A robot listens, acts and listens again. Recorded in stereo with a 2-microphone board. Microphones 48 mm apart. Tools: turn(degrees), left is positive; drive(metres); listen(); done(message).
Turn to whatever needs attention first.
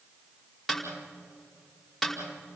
listen()
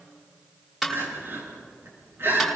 turn(degrees=-55)
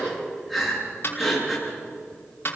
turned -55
done("Found it: crying, straight ahead.")